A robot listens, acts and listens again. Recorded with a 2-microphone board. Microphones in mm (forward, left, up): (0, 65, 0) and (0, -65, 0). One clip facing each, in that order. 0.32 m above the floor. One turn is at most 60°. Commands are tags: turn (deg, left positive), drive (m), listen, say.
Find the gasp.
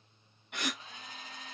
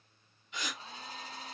<turn deg="60"/>
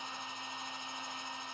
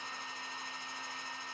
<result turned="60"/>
<listen/>
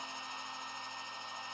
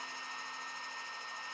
<say>I heard a gasp, but can't make it out now. It was about 5° left or 55° left.</say>